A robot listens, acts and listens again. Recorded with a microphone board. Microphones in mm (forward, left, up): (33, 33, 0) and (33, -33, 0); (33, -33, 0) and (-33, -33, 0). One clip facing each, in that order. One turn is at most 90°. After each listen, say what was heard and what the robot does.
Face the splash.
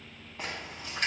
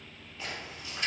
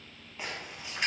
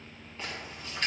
The splash: 75° left. Turn 75° left.
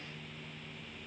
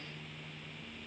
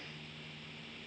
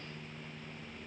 I heard a splash from this way, but can't make it out now.